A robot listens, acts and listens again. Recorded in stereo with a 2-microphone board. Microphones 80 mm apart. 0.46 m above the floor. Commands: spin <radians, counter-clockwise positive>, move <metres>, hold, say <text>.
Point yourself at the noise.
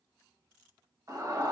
spin -0.70
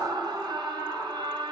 spin -1.57
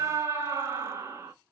spin -0.61
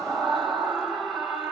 say Found it: a scream, straight ahead, 1 to 2 m away.